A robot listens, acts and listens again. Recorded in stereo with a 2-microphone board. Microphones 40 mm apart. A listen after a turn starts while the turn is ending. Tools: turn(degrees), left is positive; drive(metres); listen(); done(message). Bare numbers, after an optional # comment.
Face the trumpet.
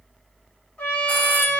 # The trumpet: about 30° left or 150° left.
turn(30)
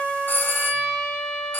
done("Found it: a trumpet, straight ahead, 2 to 4 m away.")